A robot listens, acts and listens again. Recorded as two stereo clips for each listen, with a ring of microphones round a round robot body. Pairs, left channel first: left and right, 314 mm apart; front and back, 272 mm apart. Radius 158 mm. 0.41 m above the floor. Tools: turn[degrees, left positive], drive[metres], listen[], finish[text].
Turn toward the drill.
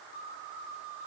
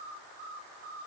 Action: listen[]
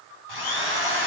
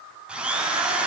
Thought: The drill: 95° left.
Action: turn[95]
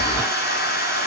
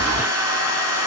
Thought: The drill is now 30° left.
Action: turn[30]
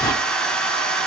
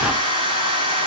Action: finish[Facing the drill.]